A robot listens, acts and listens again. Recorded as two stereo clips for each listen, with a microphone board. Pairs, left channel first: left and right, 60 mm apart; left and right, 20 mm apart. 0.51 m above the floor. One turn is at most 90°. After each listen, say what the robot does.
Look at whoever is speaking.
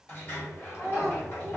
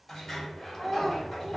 Turn 45° left.
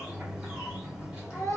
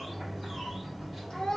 Turn 80° left.
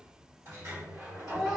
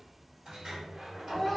Found it: a child speaking, straight ahead.